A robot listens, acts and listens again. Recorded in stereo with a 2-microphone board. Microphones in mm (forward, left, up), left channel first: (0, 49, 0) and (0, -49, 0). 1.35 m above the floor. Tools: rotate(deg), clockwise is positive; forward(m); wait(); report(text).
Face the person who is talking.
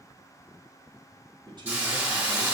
rotate(50)
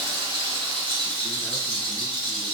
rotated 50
wait()
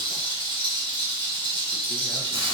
wait()
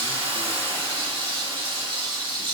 report("I heard a man speaking, but can't make it out now. It was about straight ahead or 80° right.")